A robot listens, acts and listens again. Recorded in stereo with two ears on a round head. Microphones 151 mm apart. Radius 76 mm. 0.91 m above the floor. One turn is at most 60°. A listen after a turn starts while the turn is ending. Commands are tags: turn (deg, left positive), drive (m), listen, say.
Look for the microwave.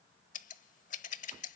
<listen/>
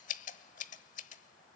<listen/>
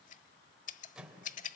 <turn deg="-30"/>
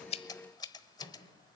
<turn deg="30"/>
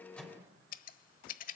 <turn deg="-10"/>
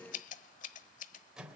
<say>Found it: a microwave, straight ahead.</say>